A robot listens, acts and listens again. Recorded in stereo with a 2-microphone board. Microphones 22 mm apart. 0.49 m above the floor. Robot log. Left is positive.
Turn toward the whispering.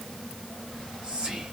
note: The whispering: about 40° right or 140° right.
cmd yaw -40
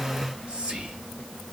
note: So it is at 90° right.
cmd yaw -90
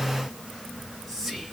end: Found it: whispering, straight ahead, 2 to 4 m away.